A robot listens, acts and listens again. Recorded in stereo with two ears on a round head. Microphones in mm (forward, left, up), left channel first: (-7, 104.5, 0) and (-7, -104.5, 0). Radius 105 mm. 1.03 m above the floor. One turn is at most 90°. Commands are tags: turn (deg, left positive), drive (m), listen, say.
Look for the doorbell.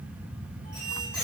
<listen/>
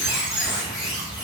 <listen/>
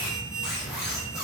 <say>I can't make out a doorbell to turn to.</say>